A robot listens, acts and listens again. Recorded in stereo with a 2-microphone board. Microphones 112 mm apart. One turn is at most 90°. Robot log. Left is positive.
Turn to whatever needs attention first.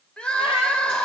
cmd yaw +30
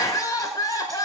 note: So it is at 140° left.
cmd yaw +90
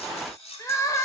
note: The crying is now 35° left.
cmd yaw +35
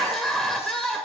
end: Facing the crying.